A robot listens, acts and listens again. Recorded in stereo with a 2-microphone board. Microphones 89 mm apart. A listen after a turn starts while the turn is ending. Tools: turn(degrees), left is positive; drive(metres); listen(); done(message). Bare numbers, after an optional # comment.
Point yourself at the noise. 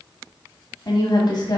# The woman speaking: about 55° left or 125° left.
turn(55)
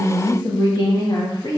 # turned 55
# So it is at 55° left.
turn(55)
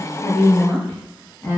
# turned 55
# The woman speaking is now 30° left.
turn(30)
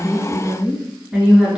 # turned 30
done("Facing the woman speaking, 2 to 4 m away.")